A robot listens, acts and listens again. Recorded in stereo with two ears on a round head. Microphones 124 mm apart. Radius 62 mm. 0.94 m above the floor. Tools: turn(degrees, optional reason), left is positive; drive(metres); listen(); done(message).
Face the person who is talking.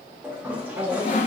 turn(degrees=-50, reason="The woman speaking: about 50° right or 130° right.")
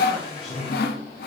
listen()
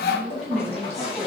done("Found it: a woman speaking, straight ahead, 2 to 4 m away.")